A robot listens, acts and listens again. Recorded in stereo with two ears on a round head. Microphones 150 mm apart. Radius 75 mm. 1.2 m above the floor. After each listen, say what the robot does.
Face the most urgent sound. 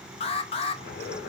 Turn 35° left.
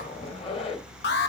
Turn 110° left.
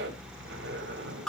Facing the alarm.